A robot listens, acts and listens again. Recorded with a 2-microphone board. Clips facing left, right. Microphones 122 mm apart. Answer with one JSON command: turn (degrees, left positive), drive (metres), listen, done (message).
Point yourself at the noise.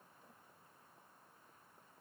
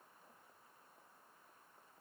{"listen": true}
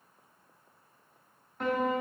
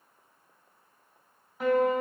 {"turn": -30}
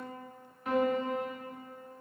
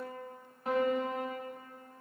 {"turn": -140}
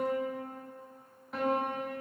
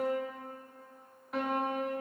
{"done": "Facing the piano, 1 to 2 m away."}